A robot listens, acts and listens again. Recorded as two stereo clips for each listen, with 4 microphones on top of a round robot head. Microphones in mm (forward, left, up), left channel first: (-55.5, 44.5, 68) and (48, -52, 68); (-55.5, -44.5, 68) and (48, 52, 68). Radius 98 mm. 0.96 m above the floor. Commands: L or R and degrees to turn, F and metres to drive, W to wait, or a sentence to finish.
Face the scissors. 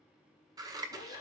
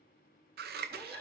L25
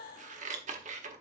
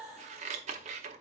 Facing the scissors, under 1 m away.